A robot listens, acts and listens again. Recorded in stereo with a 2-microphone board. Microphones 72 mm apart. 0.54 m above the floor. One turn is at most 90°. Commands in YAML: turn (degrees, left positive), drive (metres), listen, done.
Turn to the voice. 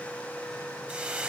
listen: true
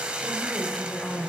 turn: 30
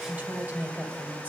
turn: -25
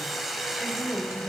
turn: -15
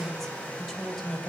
done: "Facing the woman speaking, 2 to 4 m away."